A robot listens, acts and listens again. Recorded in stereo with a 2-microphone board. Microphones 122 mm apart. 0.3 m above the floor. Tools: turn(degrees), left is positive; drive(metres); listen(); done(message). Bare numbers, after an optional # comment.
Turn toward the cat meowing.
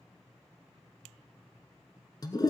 listen()
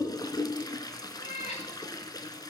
# The cat meowing: about 65° left or 115° left.
turn(65)
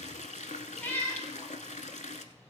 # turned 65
# So it is at 15° left.
turn(15)
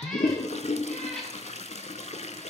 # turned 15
listen()
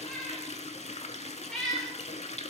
done("Found it: a cat meowing, straight ahead.")